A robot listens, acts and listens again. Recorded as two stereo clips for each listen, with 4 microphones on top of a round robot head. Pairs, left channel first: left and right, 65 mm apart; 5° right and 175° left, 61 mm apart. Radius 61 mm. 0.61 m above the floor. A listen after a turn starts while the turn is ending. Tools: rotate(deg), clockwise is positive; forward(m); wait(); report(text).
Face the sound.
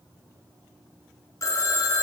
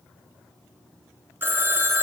rotate(-120)
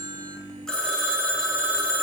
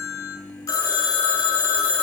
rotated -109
rotate(-10)
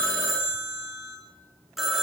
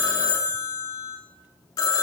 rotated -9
report("Found it: a phone ringing, straight ahead, under 1 m away.")